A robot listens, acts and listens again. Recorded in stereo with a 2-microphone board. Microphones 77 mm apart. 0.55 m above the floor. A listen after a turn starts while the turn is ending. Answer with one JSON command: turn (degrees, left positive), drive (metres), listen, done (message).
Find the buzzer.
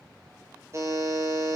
{"turn": -40}
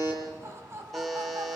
{"done": "Found it: a buzzer, straight ahead, over 4 m away."}